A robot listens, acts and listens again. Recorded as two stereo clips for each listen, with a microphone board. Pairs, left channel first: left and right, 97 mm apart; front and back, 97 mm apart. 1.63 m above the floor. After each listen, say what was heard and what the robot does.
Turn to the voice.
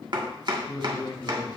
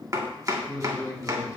The man speaking: 50° left. Turn 50° left.
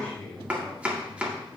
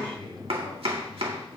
The man speaking is now 15° left. Turn 15° left.
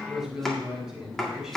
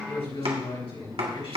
Found it: a man speaking, straight ahead.